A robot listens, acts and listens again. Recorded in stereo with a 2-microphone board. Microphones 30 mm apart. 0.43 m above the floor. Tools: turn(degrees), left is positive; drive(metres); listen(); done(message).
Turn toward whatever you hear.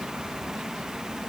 listen()
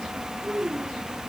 turn(degrees=-50)
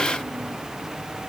listen()
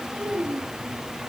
turn(degrees=-85)
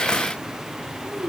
turn(degrees=-40)
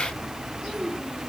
done("Found it: a child speaking, straight ahead, over 4 m away.")